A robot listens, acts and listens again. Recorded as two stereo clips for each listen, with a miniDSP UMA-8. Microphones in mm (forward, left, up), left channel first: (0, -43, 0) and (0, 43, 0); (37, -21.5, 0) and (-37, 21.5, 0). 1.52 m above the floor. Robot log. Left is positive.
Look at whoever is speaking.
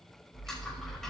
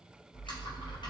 cmd idle
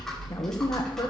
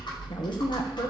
note: The woman speaking: 50° right.
cmd yaw -50
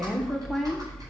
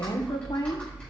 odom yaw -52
end: Facing the woman speaking, 1 to 2 m away.